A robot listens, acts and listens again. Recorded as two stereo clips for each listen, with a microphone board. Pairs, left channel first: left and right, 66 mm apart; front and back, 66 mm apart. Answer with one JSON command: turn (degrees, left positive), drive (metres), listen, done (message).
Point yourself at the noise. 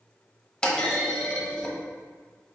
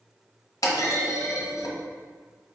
{"turn": 15}
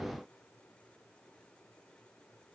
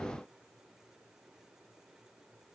{"done": "I heard a clunk from this way, but can't make it out now."}